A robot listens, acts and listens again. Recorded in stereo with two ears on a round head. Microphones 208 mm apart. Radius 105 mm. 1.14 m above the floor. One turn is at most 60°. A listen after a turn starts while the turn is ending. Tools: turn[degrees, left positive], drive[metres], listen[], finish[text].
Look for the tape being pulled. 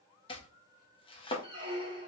Action: listen[]
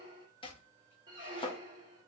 Action: listen[]
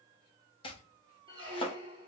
Action: finish[I can't make out tape being pulled, only chopping and a squeak.]